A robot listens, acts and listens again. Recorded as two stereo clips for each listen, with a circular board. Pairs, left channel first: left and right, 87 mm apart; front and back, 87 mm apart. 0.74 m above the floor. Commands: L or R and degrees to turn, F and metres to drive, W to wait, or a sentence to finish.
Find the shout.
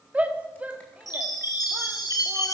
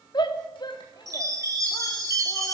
R20
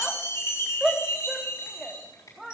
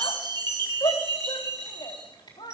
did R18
Facing the shout, 1 to 2 m away.